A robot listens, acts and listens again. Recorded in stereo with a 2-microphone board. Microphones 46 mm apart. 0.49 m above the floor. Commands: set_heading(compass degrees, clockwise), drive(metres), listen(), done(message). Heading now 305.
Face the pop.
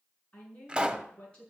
set_heading(325)
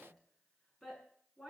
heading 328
listen()
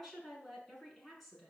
done("I heard a pop, but can't make it out now. It was about 5° left or 140° right.")